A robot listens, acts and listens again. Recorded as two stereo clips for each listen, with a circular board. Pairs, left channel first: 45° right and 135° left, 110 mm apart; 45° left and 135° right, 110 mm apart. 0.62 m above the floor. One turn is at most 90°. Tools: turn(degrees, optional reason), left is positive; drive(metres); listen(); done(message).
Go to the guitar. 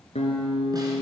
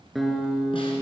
turn(degrees=-45, reason="The guitar: 45° right.")
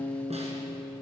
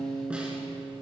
turn(degrees=20, reason="The guitar is now 20° left.")
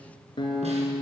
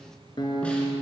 drive(metres=1.0)
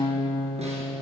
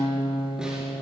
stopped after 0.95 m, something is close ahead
done("I am next to the guitar.")